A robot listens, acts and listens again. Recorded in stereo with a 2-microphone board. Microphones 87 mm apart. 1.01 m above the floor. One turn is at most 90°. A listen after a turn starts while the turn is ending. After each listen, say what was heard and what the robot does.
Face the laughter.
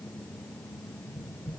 Keep listening.
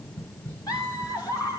The laughter: about 40° left or 140° left. Turn 40° left.
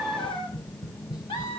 So it is at 110° left. Turn 90° left.
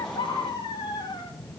The laughter is now 50° left. Turn 50° left.
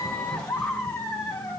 The laughter is now 20° left. Turn 20° left.
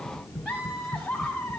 Found it: laughter, straight ahead.